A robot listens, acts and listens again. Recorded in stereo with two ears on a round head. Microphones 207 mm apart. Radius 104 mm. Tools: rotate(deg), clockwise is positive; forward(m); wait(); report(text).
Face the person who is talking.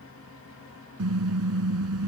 wait()
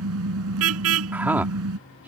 rotate(30)
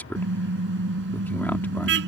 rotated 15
rotate(-10)
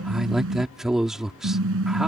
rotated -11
report("Found it: a man speaking, straight ahead.")